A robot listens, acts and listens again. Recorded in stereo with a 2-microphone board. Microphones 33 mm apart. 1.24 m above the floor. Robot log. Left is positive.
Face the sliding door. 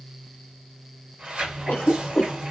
note: The sliding door: about 45° right or 135° right.
cmd yaw -45
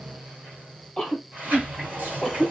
note: So it is at 85° right.
cmd yaw -85
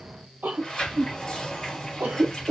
note: The sliding door is now 15° left.
cmd yaw +15
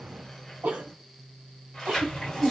end: Found it: a sliding door, straight ahead, 1 to 2 m away.